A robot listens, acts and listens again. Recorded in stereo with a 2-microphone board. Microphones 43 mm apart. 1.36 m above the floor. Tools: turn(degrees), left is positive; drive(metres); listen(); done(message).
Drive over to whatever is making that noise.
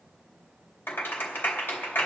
turn(degrees=45)
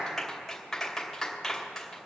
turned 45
drive(metres=1.0)
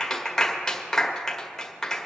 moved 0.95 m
drive(metres=1.0)
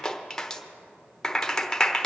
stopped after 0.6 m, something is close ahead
turn(degrees=10)
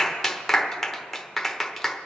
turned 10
done("I am next to the clap.")